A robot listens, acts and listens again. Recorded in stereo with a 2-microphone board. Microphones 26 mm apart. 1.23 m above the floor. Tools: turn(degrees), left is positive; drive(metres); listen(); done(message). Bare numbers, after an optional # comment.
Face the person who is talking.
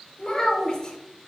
# The child speaking: about 25° left or 155° left.
turn(25)
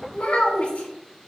# So it is at 130° left.
turn(130)
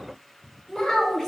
# The child speaking is now 20° left.
turn(20)
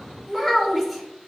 done("Found it: a child speaking, straight ahead, 1 to 2 m away.")